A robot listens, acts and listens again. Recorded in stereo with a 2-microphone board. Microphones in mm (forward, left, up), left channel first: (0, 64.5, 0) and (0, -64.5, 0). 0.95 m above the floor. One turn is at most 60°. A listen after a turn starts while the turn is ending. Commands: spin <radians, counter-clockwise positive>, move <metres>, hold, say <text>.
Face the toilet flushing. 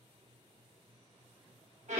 hold
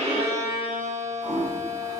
spin 0.87
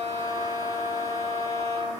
hold
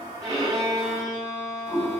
spin 1.05
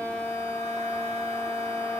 spin 0.35
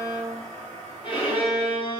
say Found it: a toilet flushing, straight ahead, 1 to 2 m away.